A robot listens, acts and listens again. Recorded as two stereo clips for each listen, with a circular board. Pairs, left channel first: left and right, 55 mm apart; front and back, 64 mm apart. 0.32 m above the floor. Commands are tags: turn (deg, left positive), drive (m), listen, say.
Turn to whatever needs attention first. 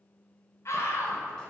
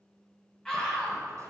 <turn deg="75"/>
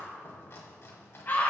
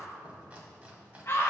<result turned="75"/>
<turn deg="35"/>
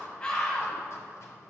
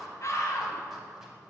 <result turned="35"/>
<turn deg="10"/>
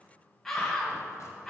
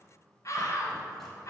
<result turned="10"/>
<say>Facing the scream, 1 to 2 m away.</say>